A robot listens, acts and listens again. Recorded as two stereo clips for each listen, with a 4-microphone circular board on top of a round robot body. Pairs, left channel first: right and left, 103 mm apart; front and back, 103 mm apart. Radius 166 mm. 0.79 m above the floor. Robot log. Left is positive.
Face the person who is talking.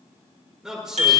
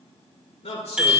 end: Facing the man speaking.